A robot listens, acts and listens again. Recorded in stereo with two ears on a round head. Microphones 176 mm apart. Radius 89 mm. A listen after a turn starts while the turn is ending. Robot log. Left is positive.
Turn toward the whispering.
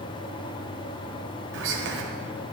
note: The whispering: about 70° right or 110° right.
cmd yaw -70
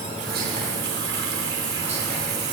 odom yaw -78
cmd idle
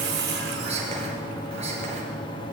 note: So it is at 30° right.
cmd yaw -30
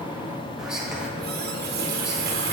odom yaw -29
end: Facing the whispering.